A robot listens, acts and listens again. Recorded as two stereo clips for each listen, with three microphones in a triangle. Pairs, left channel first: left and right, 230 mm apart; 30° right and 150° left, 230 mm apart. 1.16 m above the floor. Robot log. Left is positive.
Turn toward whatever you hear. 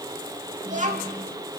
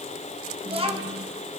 note: The child speaking: 145° right.
cmd yaw -145
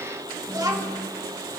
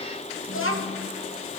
note: The child speaking is now 15° right.
cmd yaw -15
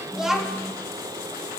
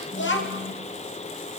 end: Facing the child speaking, 1 to 2 m away.